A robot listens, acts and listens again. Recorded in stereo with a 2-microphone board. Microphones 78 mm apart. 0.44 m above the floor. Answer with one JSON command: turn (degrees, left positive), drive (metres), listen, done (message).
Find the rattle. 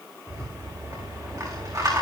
{"turn": -45}
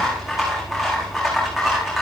{"done": "Found it: a rattle, straight ahead."}